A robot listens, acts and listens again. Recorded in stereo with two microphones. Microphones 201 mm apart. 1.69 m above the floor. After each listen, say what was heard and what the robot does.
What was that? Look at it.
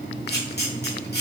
The camera shutter: about 55° left or 125° left. Turn 55° left.
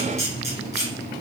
So it is at 60° left. Turn 60° left.
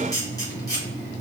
The camera shutter is now 20° left. Turn 20° left.
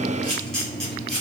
Found it: a camera shutter, straight ahead, 1 to 2 m away.